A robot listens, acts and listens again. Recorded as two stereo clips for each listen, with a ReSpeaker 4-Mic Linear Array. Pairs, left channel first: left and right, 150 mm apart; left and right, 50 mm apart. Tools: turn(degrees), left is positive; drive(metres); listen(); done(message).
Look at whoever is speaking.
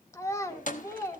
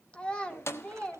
turn(degrees=20)
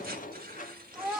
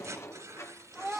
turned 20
done("Facing the child speaking.")